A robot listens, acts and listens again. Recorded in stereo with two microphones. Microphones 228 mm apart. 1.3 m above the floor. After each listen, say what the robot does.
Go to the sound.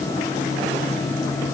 Keep listening.
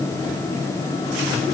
Keep listening.
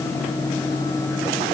I can't make out anything to turn to.